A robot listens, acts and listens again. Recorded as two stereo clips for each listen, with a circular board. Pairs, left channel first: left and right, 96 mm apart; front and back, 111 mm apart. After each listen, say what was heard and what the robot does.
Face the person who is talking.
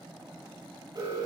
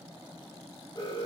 Keep listening.
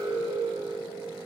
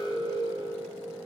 Keep listening.
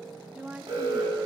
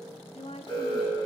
The woman speaking: 15° right. Turn 15° right.
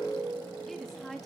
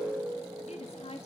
Facing the woman speaking.